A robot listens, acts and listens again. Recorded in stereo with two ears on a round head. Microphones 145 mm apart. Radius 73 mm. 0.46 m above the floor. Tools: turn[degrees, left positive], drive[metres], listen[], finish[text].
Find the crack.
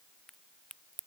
Action: turn[30]
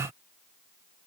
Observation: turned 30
Action: listen[]
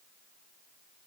Action: finish[I heard a crack, but can't make it out now. It was about 30° right or 150° left.]